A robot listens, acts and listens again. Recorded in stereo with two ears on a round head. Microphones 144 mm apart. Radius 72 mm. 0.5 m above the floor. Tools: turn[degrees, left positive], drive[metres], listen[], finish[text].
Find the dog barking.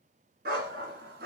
Thought: The dog barking: about 70° right or 110° right.
Action: turn[-70]
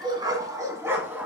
Thought: So it is at 10° right.
Action: turn[-10]
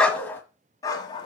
Thought: The dog barking is now 30° left.
Action: turn[30]
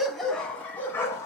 Thought: The dog barking is now 20° left.
Action: turn[20]
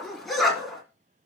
Action: finish[Facing the dog barking, 2 to 4 m away.]